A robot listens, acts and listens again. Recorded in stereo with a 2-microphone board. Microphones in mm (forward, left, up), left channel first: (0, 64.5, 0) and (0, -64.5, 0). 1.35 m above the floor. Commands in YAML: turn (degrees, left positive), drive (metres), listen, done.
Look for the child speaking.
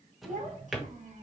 turn: -90
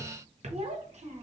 turn: -65
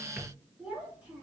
turn: -15
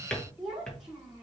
done: "Facing the child speaking."